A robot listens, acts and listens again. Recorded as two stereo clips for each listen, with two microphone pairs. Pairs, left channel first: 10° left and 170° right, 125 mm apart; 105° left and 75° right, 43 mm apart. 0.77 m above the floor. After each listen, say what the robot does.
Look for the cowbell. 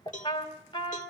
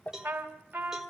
Found it: a cowbell, straight ahead.